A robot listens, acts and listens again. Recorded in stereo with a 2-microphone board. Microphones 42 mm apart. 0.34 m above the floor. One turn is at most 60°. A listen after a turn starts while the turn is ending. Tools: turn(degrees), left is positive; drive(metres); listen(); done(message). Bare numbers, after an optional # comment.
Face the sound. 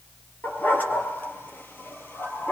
# The dog barking: about 60° left or 120° left.
turn(60)
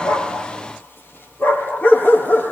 # So it is at 55° left.
turn(55)
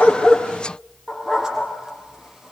# The dog barking is now 10° right.
turn(-10)
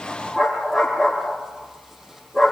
done("Facing the dog barking, over 4 m away.")